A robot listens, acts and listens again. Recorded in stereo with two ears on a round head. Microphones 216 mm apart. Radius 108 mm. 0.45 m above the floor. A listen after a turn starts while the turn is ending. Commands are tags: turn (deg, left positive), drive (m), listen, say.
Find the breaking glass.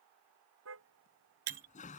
<turn deg="-60"/>
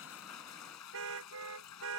<listen/>
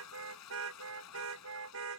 <say>I heard breaking glass, but can't make it out now. It was about straight ahead or 60° right.</say>